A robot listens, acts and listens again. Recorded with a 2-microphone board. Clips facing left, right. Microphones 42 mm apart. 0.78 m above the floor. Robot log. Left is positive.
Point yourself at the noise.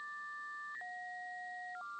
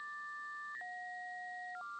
cmd idle
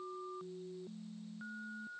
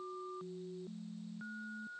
cmd idle
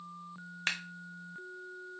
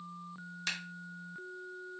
note: The scissors: about 40° left or 140° left.
cmd yaw +40
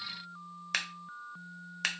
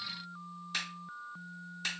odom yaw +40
note: So it is at 90° left.
cmd yaw +90
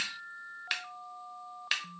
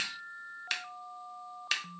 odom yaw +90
note: The scissors is now 10° left.
cmd yaw +10
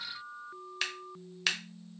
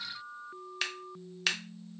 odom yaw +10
end: Facing the scissors, under 1 m away.